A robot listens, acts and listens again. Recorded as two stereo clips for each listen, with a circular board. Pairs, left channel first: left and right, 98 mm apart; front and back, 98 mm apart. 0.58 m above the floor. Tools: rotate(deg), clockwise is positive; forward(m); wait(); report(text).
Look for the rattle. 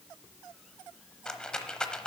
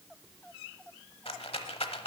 rotate(-10)
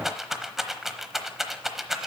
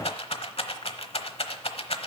report("Facing the rattle, under 1 m away.")